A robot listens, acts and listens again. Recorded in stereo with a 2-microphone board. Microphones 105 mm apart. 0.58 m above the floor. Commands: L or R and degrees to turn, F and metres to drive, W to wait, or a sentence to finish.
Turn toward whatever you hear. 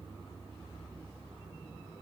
W
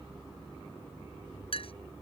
L60
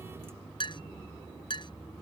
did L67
L50
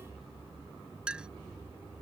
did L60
R10
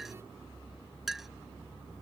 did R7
Facing the clink.